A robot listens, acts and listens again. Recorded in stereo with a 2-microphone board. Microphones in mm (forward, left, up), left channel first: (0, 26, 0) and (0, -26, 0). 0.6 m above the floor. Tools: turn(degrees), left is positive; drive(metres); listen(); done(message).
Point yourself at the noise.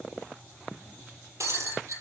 turn(degrees=-90)
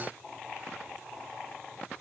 done("Facing where the breaking glass came from. I can't hear it now.")